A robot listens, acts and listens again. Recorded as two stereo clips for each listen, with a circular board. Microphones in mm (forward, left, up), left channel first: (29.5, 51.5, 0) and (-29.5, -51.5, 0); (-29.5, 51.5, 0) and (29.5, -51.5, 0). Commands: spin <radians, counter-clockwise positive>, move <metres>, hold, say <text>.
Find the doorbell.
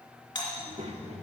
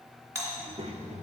say Facing the doorbell, 2 to 4 m away.